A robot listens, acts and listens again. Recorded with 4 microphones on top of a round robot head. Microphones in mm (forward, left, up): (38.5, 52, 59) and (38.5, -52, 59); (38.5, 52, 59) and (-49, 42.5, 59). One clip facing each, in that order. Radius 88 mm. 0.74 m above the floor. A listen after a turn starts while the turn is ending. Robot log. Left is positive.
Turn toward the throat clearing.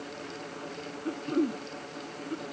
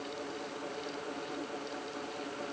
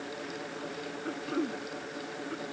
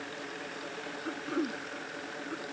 note: The throat clearing: 100° left.
cmd yaw +100
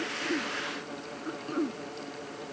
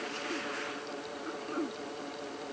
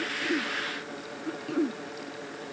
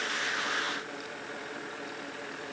end: Found it: throat clearing, straight ahead.